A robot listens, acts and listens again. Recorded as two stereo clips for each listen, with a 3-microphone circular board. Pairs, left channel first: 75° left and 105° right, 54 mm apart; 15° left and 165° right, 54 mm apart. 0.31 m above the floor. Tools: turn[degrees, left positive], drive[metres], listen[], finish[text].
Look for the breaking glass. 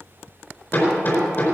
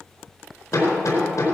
Action: listen[]
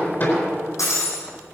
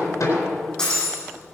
Thought: The breaking glass: 90° left.
Action: turn[90]
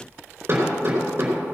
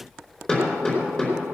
Action: finish[I heard breaking glass from this way, but can't make it out now.]